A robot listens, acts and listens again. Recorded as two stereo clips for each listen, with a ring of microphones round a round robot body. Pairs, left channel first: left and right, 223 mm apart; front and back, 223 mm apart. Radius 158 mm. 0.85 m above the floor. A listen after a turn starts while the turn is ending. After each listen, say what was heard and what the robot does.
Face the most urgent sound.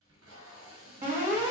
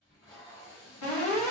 The alarm: 35° right. Turn 35° right.
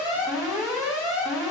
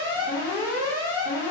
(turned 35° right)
Found it: an alarm, straight ahead.